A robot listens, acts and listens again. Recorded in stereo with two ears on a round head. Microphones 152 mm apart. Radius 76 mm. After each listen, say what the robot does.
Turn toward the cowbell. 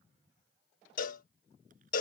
Turn 50° left.
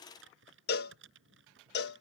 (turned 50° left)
Turn 75° left.
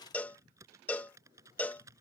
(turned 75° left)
Turn 10° left.
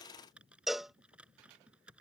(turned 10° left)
Facing the cowbell.